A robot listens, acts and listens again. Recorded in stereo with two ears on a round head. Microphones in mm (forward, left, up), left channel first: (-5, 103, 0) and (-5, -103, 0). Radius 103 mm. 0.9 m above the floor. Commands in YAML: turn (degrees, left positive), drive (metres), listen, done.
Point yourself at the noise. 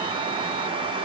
listen: true
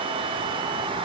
listen: true
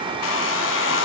turn: 55
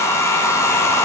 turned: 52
turn: 15
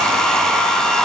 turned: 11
done: "Facing the hair dryer, under 1 m away."